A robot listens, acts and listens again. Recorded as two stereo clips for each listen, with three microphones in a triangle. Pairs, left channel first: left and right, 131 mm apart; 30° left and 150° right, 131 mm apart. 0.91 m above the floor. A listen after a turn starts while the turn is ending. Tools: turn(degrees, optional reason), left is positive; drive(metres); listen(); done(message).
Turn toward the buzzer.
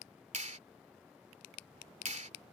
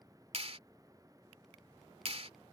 listen()
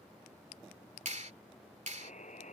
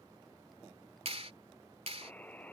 turn(degrees=105, reason="The buzzer: 105° left.")
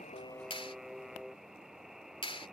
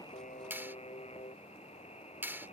done("Facing the buzzer.")